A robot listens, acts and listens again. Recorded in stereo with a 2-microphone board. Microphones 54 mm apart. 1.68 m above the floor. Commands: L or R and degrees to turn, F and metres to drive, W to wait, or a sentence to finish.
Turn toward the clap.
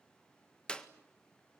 L15
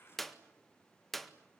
Facing the clap.